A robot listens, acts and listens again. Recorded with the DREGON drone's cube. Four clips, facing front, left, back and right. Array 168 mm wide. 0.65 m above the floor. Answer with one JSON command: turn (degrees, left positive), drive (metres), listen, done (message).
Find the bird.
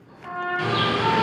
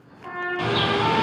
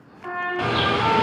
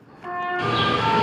{"turn": 170}
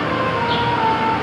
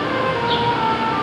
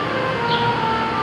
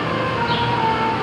{"turn": 10}
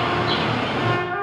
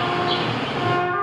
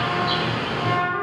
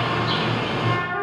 {"done": "Found it: a bird, straight ahead, 1 to 2 m away."}